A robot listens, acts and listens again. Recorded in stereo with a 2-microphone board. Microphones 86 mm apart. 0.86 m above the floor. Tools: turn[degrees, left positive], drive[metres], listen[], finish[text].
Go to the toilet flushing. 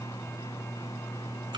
Action: listen[]
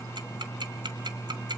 Action: listen[]
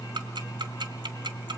Action: finish[I can't make out a toilet flushing to turn to.]